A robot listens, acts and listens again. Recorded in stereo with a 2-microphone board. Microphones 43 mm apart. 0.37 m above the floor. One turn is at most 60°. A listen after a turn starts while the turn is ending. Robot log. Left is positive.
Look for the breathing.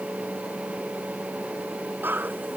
note: The breathing: about 50° right or 130° right.
cmd yaw -50
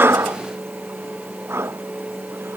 note: So it is at 80° right.
cmd yaw -60
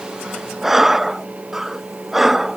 end: Found it: breathing, straight ahead.